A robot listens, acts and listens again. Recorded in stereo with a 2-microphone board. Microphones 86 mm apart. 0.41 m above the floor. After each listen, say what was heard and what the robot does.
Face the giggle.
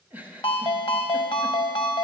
The giggle: about 20° right or 160° right. Turn 20° right.
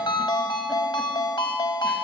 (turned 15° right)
Keep listening.
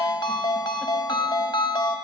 Keep listening.
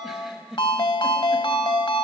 Facing the giggle, 1 to 2 m away.